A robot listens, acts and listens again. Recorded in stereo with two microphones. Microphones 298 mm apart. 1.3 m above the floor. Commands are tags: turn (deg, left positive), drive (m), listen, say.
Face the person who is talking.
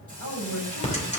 <turn deg="90"/>
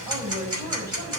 <turn deg="-10"/>
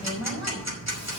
<say>Facing the woman speaking, over 4 m away.</say>